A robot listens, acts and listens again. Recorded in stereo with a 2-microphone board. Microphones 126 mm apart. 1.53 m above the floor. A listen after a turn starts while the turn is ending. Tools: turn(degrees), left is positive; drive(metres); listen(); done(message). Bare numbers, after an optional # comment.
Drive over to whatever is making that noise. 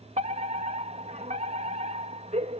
# The fire alarm: about 70° right or 110° right.
turn(-70)
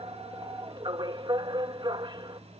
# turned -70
# So it is at 40° right.
turn(-40)
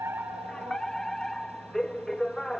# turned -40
drive(1.0)
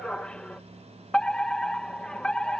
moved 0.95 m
drive(1.0)
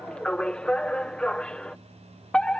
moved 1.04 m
# The fire alarm is now 10° left.
turn(10)
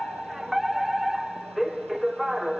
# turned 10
drive(1.0)
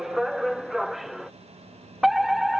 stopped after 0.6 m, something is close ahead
done("I am next to the fire alarm.")